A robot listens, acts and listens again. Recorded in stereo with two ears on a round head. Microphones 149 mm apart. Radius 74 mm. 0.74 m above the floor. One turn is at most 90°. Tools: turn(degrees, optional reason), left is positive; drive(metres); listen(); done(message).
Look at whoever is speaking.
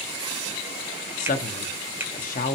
turn(degrees=50, reason="The man speaking: about 50° left or 130° left.")
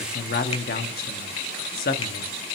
turn(degrees=70, reason="So it is at 70° left.")
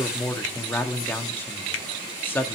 turn(degrees=15, reason="The man speaking is now 15° left.")
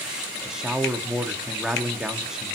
done("Facing the man speaking.")